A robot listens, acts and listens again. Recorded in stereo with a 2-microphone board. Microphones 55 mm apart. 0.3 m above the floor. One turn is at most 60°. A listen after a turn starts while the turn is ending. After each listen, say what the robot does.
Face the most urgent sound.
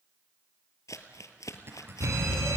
Turn 60° right.
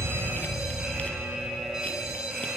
Turn 10° right.
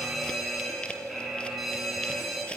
Found it: a fire alarm, straight ahead.